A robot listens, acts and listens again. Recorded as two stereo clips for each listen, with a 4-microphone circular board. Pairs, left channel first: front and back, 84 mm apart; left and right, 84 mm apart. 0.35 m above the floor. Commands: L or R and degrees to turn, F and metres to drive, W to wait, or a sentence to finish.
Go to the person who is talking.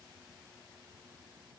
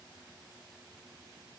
W
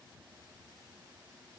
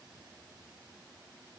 W
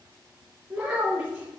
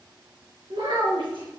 R100
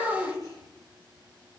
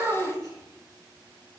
R35
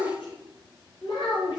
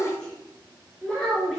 L10
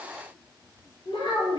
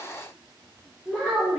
F1.0
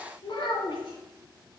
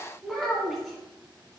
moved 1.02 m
F1.0
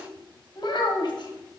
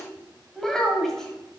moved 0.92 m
F1.0
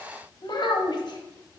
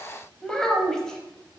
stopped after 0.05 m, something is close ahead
L10
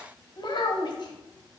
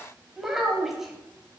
I am next to the child speaking.